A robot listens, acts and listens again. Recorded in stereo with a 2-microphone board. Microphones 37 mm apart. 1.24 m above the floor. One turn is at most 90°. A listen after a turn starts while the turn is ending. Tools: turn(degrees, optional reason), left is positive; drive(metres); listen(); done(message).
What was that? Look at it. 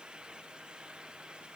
listen()
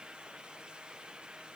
listen()
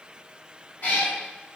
turn(degrees=45, reason="The cat meowing: about 45° left or 135° left.")
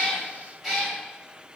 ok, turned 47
done("Facing the cat meowing.")